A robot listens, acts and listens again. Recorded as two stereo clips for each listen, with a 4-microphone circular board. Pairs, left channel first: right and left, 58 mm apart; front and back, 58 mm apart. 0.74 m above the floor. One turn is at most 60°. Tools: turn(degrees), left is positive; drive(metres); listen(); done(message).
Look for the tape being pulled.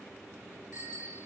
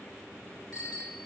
listen()
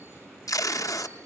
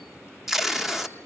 turn(degrees=-60)
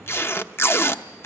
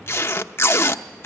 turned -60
turn(degrees=-45)
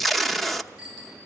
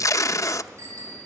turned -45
done("Facing the tape being pulled, under 1 m away.")